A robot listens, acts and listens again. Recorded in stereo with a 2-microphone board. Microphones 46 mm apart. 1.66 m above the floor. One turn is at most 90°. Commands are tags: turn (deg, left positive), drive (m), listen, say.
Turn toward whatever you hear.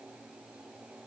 <listen/>
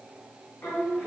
<turn deg="60"/>
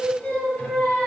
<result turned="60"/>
<turn deg="30"/>
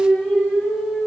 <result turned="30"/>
<turn deg="20"/>
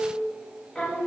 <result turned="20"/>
<turn deg="15"/>
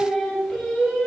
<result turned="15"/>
<say>Found it: singing, straight ahead.</say>